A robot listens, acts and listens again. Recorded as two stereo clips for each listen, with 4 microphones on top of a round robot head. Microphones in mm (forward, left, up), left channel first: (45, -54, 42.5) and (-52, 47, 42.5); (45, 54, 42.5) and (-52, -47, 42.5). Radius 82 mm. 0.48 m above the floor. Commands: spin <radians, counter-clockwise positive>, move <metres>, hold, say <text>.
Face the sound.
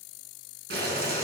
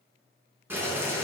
spin 2.62
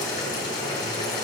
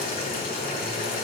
spin 0.26
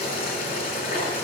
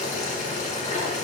say Facing the boiling.